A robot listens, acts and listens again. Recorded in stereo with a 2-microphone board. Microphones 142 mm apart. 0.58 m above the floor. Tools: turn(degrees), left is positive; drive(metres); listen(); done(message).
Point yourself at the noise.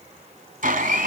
turn(degrees=-90)
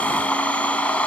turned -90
turn(degrees=10)
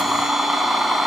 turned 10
done("Found it: a blender, straight ahead, 2 to 4 m away.")